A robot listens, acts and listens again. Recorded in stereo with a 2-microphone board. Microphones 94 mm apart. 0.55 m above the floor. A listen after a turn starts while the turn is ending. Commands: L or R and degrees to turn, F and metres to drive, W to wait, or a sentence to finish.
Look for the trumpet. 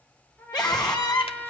L20
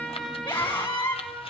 Facing the trumpet, over 4 m away.